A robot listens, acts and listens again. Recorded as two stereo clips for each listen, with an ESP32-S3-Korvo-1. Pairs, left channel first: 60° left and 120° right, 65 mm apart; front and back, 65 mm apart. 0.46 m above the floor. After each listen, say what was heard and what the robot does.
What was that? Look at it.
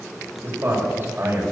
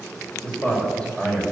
The man speaking: 65° right. Turn 65° right.
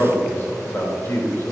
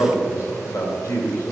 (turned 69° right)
The man speaking is now 35° left. Turn 35° left.
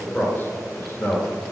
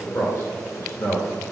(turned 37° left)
The man speaking is now 30° left. Turn 30° left.
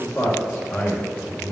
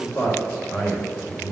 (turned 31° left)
The man speaking is now 35° left. Turn 35° left.
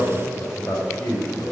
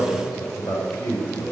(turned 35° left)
Found it: a man speaking, straight ahead.